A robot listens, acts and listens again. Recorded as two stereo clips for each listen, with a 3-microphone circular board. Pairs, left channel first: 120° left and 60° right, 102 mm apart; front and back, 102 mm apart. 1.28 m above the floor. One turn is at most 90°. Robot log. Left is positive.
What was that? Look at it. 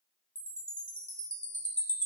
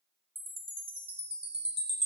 note: The chime: 160° right.
cmd yaw -90
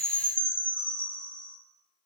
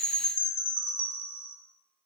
note: The chime is now 75° right.
cmd yaw -75
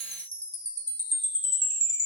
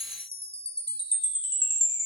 end: Facing the chime, 1 to 2 m away.